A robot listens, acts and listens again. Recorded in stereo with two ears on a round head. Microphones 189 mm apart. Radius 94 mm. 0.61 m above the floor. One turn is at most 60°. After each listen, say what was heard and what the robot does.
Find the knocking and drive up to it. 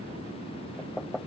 Turn 30° left.
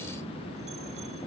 Keep listening.
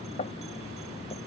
So it is at 145° left. Turn 60° left.
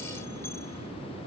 Nothing new. It was at 85° left. Turn 60° left.
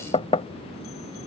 The knocking is now 30° left. Turn 30° left.
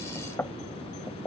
The knocking is now 10° left. Turn 10° left.
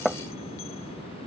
Drive 1.0 m forward.
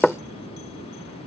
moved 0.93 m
Drive 1.0 m forward.
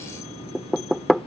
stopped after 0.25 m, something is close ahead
I am next to the knocking.